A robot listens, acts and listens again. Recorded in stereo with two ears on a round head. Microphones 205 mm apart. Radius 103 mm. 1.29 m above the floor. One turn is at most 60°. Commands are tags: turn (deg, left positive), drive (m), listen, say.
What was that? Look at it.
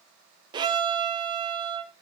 <turn deg="-20"/>
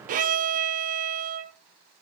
<turn deg="-60"/>
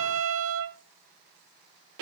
<turn deg="-60"/>
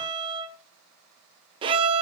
<turn deg="-25"/>
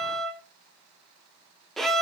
<say>Facing the violin.</say>